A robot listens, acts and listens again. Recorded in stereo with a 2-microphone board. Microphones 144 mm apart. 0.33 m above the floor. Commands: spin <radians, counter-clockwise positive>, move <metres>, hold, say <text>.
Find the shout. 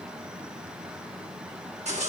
hold
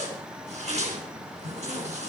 hold
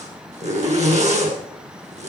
say I can't make out a shout, only a zipper.